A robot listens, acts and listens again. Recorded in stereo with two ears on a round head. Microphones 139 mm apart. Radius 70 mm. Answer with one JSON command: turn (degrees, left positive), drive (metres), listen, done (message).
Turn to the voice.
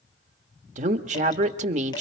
{"turn": -45}
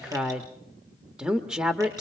{"done": "Facing the woman speaking, 1 to 2 m away."}